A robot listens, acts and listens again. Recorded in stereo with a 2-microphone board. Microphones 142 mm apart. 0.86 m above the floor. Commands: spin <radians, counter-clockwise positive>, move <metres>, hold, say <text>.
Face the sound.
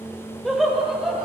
spin 0.52
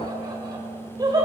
spin -0.52
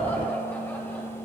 spin 0.17
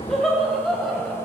say Found it: laughter, straight ahead, over 4 m away.